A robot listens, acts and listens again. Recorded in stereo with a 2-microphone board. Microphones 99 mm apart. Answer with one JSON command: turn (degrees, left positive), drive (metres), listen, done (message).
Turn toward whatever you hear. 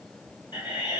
{"turn": 45}
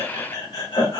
{"turn": 85}
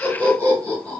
{"turn": 15}
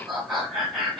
{"done": "Facing the laughter."}